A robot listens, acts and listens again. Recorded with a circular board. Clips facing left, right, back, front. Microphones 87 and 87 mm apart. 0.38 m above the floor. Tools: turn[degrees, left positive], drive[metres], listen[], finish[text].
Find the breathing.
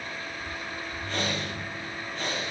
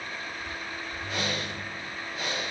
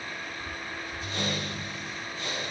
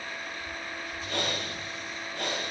Action: finish[Found it: breathing, straight ahead, over 4 m away.]